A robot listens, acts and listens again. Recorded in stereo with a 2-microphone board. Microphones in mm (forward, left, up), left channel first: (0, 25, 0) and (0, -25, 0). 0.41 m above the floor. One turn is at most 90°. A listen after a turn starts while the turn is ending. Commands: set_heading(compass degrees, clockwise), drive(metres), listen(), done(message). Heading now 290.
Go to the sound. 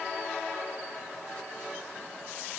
listen()
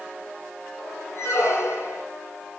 set_heading(230)
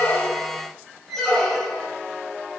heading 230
drive(1.0)
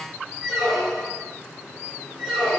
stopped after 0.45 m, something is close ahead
done("Blocked. The squeak is further on, straight ahead.")